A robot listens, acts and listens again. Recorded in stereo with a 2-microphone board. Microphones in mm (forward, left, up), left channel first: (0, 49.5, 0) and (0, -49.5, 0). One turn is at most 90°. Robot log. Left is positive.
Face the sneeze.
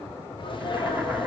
note: The sneeze: about 50° left or 130° left.
cmd yaw +50
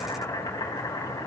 cmd idle
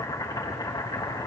end: I heard a sneeze, but can't make it out now. It was about straight ahead or 80° left.